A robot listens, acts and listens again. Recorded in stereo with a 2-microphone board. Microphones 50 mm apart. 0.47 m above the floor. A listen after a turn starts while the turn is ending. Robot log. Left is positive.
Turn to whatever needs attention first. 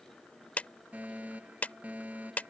note: The fire alarm: about 30° right or 150° right.
cmd yaw -30
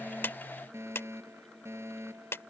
note: So it is at 115° right.
cmd yaw -115
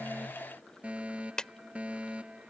note: The fire alarm is now 25° right.
cmd yaw -25
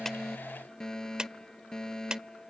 note: The fire alarm is now 10° left.
cmd yaw +10
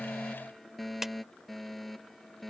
end: Found it: a fire alarm, straight ahead.